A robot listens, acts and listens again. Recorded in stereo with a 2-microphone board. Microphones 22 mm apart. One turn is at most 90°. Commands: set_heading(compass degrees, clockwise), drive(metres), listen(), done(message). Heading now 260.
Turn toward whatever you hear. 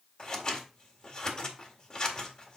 set_heading(220)
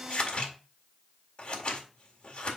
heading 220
set_heading(130)
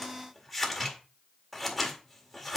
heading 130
done("Facing the scissors, 1 to 2 m away.")